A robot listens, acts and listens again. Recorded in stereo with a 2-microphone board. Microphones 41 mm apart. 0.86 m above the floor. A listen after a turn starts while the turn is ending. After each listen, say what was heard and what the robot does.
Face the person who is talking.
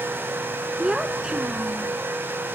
The child speaking: about 20° right or 160° right. Turn 20° right.
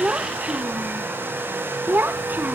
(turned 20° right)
So it is at 130° right. Turn 130° right.
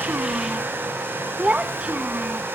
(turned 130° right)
The child speaking is now 25° right. Turn 25° right.
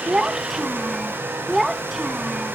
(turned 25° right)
Found it: a child speaking, straight ahead.